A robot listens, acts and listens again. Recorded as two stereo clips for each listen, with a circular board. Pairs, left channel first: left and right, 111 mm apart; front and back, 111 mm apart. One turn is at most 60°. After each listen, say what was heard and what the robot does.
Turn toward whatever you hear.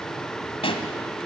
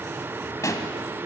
The pop: 60° left. Turn 60° left.
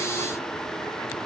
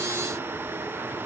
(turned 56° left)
I heard a pop from this way, but can't make it out now.